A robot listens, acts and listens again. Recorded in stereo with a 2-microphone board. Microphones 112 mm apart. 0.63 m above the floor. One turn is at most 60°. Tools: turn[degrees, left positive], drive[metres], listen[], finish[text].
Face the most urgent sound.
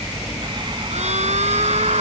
Action: turn[-60]
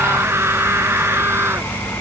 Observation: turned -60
Thought: So it is at 20° right.
Action: turn[-20]
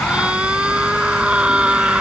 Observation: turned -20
Thought: The scream is now 10° right.
Action: turn[-10]
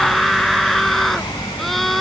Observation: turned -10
Action: finish[Found it: a scream, straight ahead.]